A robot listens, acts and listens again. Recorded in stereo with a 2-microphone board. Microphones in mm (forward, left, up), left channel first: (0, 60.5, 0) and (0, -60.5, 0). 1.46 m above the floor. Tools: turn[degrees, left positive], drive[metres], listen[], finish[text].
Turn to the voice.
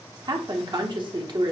Thought: The woman speaking: about 40° right or 140° right.
Action: turn[-40]
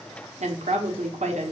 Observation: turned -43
Thought: So it is at 95° right.
Action: turn[-95]
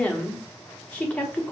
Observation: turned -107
Thought: The woman speaking is now 10° left.
Action: turn[10]
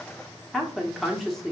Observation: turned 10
Action: finish[Facing the woman speaking.]